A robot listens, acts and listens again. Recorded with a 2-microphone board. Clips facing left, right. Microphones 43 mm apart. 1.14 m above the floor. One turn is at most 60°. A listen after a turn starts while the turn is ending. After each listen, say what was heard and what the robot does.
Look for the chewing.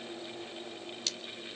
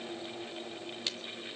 Keep listening.
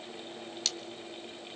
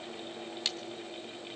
Keep listening.
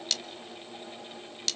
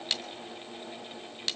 I can't make out chewing to turn to.